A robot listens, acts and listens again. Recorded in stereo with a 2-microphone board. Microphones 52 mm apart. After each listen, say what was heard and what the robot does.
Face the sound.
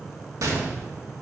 Turn 90° right.
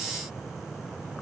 Facing where the gunshot came from. I can't hear it now.